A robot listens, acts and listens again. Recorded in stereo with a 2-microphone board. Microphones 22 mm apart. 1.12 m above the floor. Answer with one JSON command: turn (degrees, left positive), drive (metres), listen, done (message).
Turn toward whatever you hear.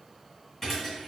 {"turn": 30}
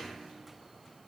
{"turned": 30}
{"listen": true}
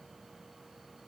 {"done": "I heard a thud, but can't make it out now. It was about 20° right or 140° left."}